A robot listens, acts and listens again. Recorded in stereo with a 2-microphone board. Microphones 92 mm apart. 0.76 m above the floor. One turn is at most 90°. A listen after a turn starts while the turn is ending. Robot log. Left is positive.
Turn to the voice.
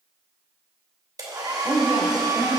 note: The woman speaking: about 45° right or 135° right.
cmd yaw -45
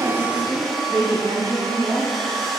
note: So it is at 80° right.
cmd yaw -80
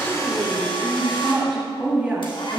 note: The woman speaking is now 20° right.
cmd yaw -20
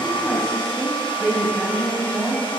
end: Found it: a woman speaking, straight ahead.